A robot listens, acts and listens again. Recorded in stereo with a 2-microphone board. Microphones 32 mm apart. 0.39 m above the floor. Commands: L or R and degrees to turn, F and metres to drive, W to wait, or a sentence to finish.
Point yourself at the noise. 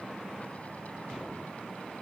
W
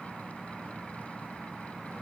W
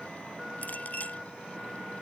L55
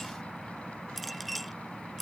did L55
Found it: a clink, straight ahead.